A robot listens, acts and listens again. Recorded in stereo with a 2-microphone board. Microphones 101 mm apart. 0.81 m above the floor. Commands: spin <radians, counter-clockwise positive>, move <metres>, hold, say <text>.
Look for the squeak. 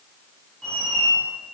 spin 0.52
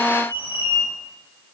spin 2.44
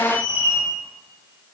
spin -0.35
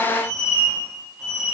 say Found it: a squeak, straight ahead, 1 to 2 m away.